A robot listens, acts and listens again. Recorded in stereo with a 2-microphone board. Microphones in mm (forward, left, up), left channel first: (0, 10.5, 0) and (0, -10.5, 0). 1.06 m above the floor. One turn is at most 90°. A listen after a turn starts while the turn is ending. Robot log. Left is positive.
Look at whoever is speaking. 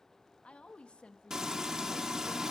note: The woman speaking: about 70° left or 110° left.
cmd yaw +70
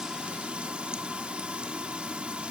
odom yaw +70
cmd idle
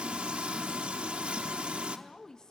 note: So it is at 35° left.
cmd yaw +35
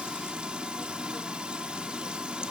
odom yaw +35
cmd idle
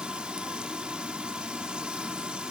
cmd idle
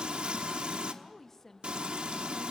note: The woman speaking is now 20° left.
cmd yaw +20
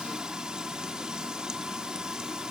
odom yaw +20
cmd idle
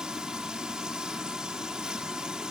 cmd idle
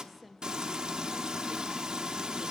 end: Facing the woman speaking, 1 to 2 m away.